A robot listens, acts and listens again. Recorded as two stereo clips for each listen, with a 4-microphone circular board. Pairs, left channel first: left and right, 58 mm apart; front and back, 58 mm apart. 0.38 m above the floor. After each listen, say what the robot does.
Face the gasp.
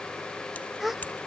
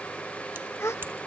Facing the gasp.